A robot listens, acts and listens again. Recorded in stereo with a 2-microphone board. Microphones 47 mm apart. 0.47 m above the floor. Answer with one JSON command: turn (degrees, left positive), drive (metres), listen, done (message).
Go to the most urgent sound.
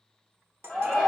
{"turn": 30}
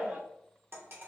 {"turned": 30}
{"turn": -25}
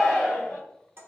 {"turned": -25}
{"turn": 10}
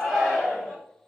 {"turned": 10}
{"drive": 1.0}
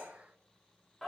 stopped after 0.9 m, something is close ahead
{"done": "Arrived at the shout, straight ahead."}